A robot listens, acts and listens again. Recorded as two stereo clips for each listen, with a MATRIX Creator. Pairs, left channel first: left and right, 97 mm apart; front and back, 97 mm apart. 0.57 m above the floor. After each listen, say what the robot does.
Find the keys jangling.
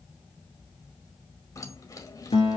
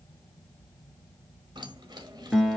Turn 140° left.
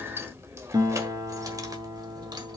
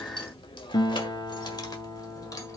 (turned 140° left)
Turn 50° right.
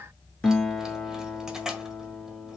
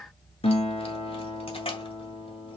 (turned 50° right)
Facing the keys jangling.